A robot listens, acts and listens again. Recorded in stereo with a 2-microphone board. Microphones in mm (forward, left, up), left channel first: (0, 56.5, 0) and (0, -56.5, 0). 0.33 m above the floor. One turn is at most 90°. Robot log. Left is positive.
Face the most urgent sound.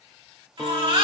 note: The baby crying: about 45° right or 135° right.
cmd yaw -45
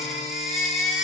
end: Found it: a baby crying, straight ahead, 2 to 4 m away.